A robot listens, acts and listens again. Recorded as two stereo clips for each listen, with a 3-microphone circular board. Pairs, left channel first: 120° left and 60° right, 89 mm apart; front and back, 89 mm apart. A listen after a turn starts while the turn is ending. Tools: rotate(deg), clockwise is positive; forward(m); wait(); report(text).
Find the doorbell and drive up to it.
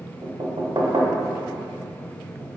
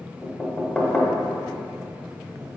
wait()
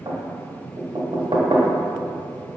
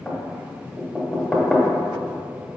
wait()
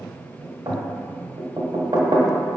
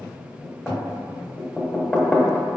report("I can't make out a doorbell to turn to.")